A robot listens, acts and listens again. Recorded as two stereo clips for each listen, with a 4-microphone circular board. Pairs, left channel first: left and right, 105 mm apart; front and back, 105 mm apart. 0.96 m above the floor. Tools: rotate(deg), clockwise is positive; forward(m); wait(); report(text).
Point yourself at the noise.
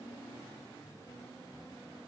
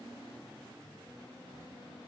wait()
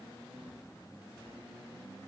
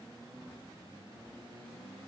wait()
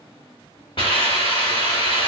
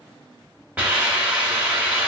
rotate(-105)
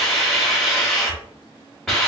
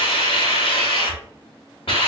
report("Facing the hiss, 1 to 2 m away.")